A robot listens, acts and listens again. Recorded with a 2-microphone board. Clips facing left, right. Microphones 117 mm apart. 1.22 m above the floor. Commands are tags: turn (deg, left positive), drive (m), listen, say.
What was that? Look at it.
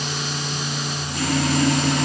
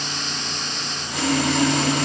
<turn deg="-60"/>
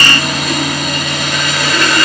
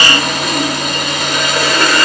<turn deg="-60"/>
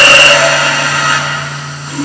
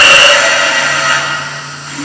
<turn deg="15"/>
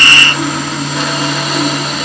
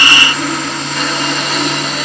<say>Facing the sawing.</say>